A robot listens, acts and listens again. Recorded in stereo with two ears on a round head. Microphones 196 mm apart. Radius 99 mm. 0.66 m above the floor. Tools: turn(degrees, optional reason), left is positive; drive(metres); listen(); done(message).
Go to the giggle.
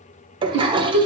turn(degrees=-65, reason="The giggle: about 65° right or 115° right.")
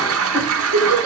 turn(degrees=-50, reason="So it is at 50° right.")
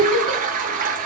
drive(metres=1.0)
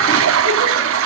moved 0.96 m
listen()
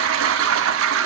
listen()
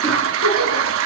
done("Facing where the giggle came from. I can't hear it now. I did not reach it.")